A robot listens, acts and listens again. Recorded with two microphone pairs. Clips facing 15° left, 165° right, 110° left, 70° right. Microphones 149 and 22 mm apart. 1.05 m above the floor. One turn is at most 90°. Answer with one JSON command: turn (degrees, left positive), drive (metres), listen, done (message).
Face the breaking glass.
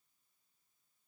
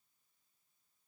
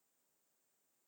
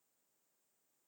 {"listen": true}
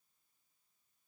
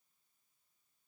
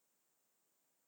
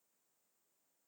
{"listen": true}
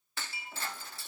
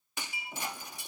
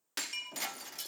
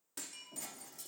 {"turn": 90}
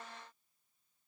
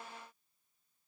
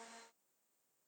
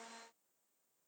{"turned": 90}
{"turn": 30}
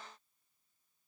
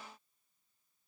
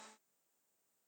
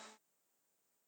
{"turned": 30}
{"done": "I heard breaking glass from this way, but can't make it out now."}